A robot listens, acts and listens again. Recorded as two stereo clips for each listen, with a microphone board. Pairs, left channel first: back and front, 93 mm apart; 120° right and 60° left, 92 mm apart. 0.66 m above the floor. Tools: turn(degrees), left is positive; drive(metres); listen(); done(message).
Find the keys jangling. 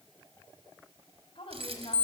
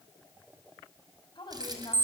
turn(degrees=15)
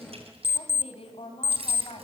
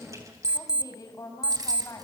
turn(degrees=10)
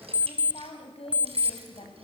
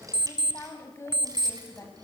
listen()
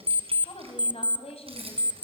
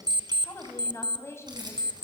turn(degrees=15)
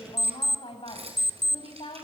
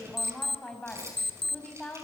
done("Facing the keys jangling.")